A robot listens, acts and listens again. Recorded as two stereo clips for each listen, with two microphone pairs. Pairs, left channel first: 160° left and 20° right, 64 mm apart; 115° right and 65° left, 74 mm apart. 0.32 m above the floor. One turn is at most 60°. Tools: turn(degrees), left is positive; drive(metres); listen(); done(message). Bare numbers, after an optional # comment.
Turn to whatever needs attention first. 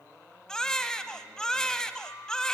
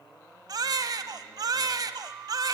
# The baby crying: 80° left.
turn(60)
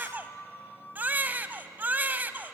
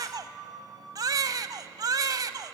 # The baby crying is now 40° left.
turn(40)
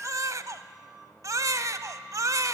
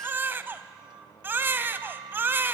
done("Found it: a baby crying, straight ahead, under 1 m away.")